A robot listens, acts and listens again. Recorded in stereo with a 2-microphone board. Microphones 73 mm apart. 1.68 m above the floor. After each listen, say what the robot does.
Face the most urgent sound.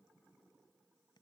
Keep listening.
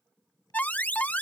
Turn 20° left.
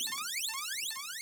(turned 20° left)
Facing the alarm.